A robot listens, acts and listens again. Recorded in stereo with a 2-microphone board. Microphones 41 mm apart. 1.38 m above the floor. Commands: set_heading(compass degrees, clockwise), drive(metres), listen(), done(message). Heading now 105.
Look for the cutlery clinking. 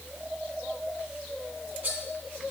set_heading(150)
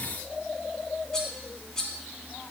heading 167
set_heading(152)
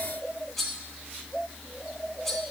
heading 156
done("Found it: cutlery clinking, straight ahead, 1 to 2 m away.")